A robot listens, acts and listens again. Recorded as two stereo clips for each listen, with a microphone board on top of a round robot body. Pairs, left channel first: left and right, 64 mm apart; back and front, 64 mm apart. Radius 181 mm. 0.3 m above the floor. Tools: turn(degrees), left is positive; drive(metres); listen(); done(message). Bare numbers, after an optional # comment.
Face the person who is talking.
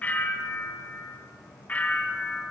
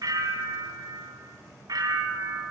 listen()
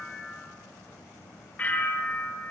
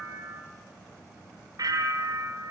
listen()
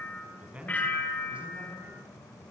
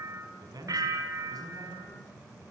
# The man speaking: 15° right.
turn(-15)
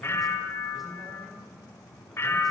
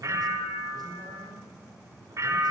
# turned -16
listen()
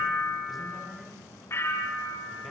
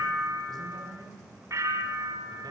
listen()
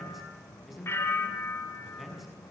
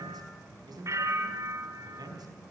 done("Facing the man speaking.")